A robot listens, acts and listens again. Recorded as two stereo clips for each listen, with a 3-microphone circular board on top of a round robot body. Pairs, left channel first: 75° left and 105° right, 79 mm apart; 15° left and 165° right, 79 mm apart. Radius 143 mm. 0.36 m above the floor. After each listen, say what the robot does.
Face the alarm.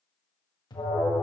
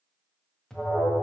Turn 100° left.
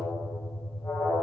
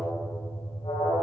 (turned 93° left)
Facing the alarm, 1 to 2 m away.